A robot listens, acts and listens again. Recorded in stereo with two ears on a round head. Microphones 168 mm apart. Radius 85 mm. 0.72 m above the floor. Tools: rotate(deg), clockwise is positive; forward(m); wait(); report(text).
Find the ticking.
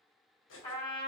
wait()
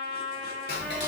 rotate(-60)
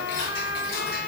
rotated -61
rotate(-55)
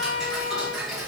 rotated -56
report("Found it: ticking, straight ahead, 1 to 2 m away.")